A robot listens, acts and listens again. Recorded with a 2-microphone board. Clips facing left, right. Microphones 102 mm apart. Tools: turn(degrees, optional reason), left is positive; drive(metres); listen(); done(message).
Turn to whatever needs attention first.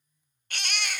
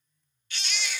turn(degrees=60, reason="The baby crying: about 60° left or 120° left.")
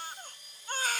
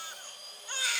turn(degrees=50, reason="So it is at 50° left.")
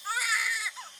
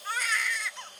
done("Found it: a baby crying, straight ahead, under 1 m away.")